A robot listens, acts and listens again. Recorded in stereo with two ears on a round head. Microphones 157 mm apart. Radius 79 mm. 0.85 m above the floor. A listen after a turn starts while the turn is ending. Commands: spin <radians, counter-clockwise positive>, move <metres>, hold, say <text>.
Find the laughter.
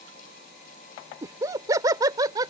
spin -0.35
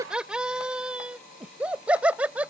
spin -0.52
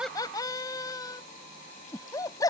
spin 0.35
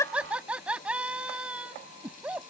say Facing the laughter.